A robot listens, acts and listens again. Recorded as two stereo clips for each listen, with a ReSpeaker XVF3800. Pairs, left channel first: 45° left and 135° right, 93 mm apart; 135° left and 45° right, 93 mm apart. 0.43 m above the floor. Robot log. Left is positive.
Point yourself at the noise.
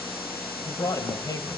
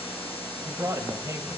end: Facing the man speaking.